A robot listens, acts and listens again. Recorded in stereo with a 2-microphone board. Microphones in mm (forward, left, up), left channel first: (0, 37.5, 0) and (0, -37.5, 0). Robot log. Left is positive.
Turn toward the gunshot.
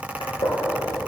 cmd yaw +90
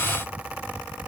end: Facing where the gunshot came from. I can't hear it now.